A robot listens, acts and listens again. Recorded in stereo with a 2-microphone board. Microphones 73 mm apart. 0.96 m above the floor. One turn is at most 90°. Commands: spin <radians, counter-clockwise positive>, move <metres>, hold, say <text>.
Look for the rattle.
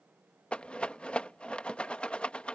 spin 0.52
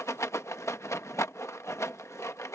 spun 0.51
spin 1.57
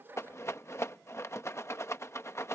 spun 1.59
spin 0.70
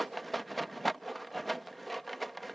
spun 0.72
say Facing the rattle.